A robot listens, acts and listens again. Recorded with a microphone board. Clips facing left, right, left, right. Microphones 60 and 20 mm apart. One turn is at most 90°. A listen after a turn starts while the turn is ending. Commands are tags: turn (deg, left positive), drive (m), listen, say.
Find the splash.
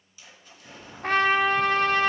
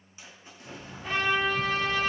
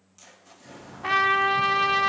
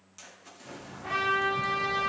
<turn deg="-25"/>
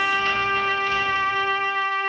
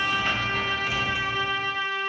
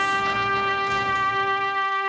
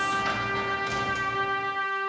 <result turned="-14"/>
<listen/>
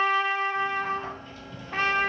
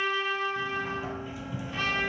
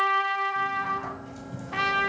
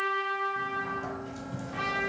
<say>I heard a splash, but can't make it out now. It was about 15° right or 140° right.</say>